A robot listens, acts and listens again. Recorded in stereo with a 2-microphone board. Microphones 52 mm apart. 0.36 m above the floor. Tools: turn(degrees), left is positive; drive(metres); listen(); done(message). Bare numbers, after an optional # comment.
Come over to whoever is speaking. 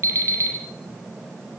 listen()
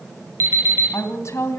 # The woman speaking: about 65° left or 115° left.
turn(65)
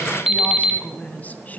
# So it is at 35° left.
turn(35)
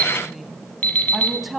drive(1.0)
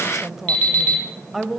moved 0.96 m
drive(1.0)
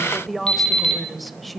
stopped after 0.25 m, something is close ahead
done("I am next to the woman speaking.")